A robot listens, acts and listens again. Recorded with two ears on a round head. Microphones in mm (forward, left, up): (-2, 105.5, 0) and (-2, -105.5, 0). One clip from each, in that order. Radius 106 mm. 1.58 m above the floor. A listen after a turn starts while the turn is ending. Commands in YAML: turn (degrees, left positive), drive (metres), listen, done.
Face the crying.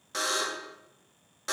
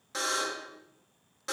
listen: true
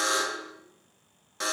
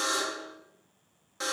listen: true
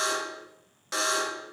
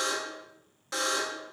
done: "I can't make out crying, only a buzzer."